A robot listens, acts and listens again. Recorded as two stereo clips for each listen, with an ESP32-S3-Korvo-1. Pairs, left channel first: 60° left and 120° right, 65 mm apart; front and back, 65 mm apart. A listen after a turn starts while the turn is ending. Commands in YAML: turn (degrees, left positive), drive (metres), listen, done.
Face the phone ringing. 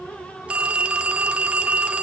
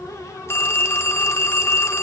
turn: -50
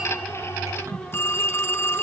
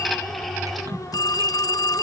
turn: 10
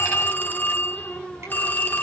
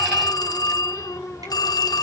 done: "Facing the phone ringing."